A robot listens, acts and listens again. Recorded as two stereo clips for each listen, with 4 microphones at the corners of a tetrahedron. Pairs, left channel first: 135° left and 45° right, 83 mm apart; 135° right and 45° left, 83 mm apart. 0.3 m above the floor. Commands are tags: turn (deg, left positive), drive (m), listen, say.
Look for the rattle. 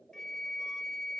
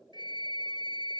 <listen/>
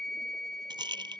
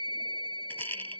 <turn deg="-70"/>
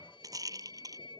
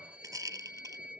<say>Facing the rattle.</say>